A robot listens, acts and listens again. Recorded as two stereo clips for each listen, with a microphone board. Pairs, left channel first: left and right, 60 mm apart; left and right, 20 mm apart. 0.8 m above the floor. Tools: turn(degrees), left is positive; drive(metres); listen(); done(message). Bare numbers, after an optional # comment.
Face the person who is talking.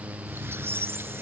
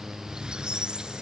listen()
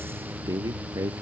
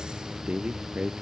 # The man speaking: about 65° right or 115° right.
turn(-65)
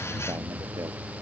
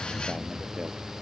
listen()
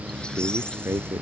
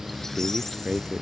# So it is at 45° right.
turn(-45)
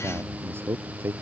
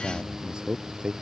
# The man speaking is now 40° right.
turn(-40)
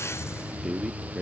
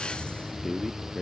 done("Found it: a man speaking, straight ahead.")